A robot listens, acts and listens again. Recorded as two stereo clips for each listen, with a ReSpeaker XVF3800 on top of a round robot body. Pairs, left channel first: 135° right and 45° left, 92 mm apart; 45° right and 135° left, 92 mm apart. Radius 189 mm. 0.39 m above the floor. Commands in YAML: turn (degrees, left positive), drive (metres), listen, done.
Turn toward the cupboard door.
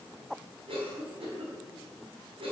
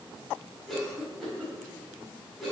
listen: true
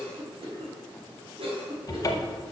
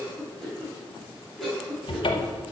turn: -80
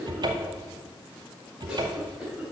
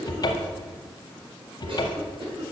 done: "Facing the cupboard door, under 1 m away."